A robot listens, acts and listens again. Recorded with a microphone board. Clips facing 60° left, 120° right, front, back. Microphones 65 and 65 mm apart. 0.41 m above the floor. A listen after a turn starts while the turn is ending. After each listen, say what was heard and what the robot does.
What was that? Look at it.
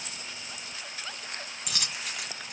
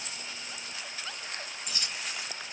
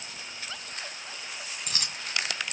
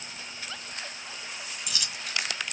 The dropped coin: 45° left. Turn 45° left.
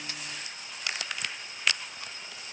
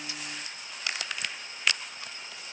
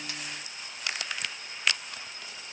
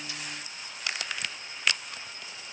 Facing where the dropped coin came from. I can't hear it now.